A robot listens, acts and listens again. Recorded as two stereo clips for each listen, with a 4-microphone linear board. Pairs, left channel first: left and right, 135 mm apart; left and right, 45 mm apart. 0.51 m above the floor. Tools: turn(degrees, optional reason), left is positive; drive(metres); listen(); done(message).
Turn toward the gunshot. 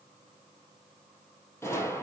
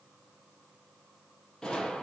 turn(degrees=20, reason="The gunshot: about 20° left or 160° left.")
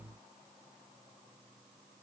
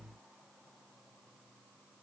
listen()
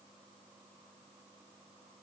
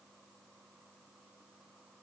done("I heard a gunshot, but can't make it out now. It was about straight ahead or 140° left.")